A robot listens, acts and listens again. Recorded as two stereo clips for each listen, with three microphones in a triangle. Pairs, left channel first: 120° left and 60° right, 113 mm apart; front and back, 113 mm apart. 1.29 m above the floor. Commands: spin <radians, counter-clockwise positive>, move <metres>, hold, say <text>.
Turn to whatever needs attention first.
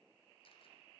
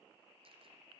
hold
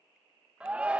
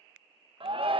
spin -2.44
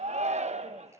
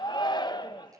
spin -0.87
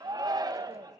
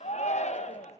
say Found it: a shout, straight ahead, 1 to 2 m away.